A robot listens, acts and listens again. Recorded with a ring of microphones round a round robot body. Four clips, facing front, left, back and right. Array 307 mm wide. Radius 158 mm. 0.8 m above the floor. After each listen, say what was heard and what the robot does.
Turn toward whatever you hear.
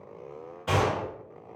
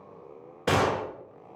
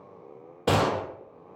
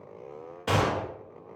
The gunshot: 160° left. Turn 160° left.
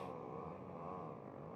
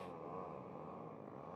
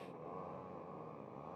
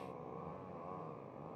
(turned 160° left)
I heard a gunshot from this way, but can't make it out now.